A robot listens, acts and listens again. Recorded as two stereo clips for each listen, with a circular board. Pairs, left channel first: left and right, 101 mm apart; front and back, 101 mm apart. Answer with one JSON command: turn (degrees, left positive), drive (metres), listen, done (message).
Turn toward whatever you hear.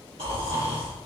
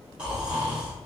{"turn": -100}
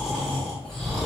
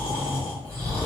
{"done": "Facing the snoring, 1 to 2 m away."}